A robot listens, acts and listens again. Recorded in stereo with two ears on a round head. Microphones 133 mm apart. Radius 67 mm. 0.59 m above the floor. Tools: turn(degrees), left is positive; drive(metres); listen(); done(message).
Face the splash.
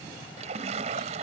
turn(degrees=-50)
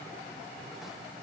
listen()
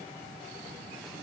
done("I heard a splash, but can't make it out now. It was about straight ahead or 80° right.")